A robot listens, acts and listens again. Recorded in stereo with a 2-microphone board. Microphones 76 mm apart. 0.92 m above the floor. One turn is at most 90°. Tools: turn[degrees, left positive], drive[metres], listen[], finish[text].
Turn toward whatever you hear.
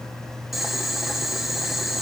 Action: turn[30]
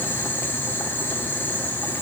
Thought: So it is at 155° left.
Action: turn[90]
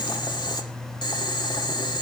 Thought: The boiling is now 75° left.
Action: turn[75]
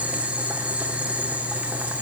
Thought: The boiling is now 15° right.
Action: turn[-15]
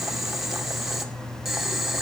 Action: finish[Found it: boiling, straight ahead, 2 to 4 m away.]